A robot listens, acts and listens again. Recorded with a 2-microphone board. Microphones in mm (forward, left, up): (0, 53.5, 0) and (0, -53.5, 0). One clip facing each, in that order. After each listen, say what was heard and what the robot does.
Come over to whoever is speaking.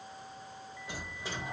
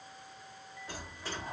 Keep listening.
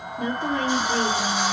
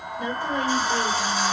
The woman speaking: about 65° left or 115° left. Turn 65° left.
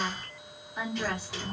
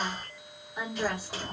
Drive 1.0 m forward.
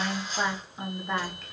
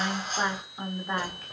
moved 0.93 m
Drive 1.0 m forward.
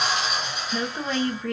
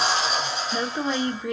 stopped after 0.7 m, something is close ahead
The woman speaking is now 15° right. Turn 15° right.
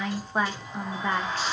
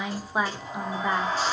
Arrived at the woman speaking, straight ahead.